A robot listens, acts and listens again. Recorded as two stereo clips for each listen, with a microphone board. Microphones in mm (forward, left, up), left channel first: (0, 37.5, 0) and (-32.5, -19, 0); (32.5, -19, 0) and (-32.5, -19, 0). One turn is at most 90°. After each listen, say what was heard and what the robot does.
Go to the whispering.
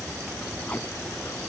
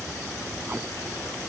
Keep listening.
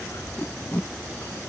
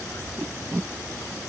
Keep listening.
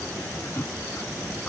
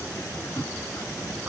I can't make out whispering, only tape being pulled.